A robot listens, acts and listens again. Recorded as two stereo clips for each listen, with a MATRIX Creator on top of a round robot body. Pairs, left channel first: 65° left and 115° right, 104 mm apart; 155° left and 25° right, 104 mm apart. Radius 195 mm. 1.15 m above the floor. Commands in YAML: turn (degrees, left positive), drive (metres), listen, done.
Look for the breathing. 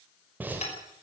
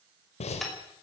turn: 175
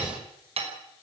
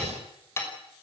listen: true
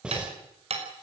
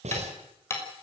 turn: -30
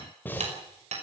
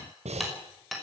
done: "Facing the breathing."